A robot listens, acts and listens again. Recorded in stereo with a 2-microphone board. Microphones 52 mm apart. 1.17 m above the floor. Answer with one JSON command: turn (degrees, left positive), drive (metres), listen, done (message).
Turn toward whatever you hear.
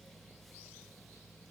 {"listen": true}
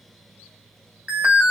{"turn": -30}
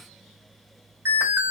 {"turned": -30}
{"turn": -120}
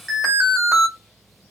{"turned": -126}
{"done": "Found it: an alarm, straight ahead."}